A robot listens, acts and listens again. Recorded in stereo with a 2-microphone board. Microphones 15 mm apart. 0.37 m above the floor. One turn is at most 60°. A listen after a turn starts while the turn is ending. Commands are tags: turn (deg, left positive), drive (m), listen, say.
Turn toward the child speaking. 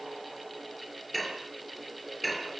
<listen/>
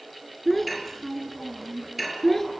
<turn deg="30"/>
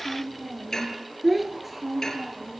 <turn deg="-15"/>
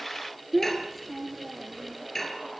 <say>Facing the child speaking.</say>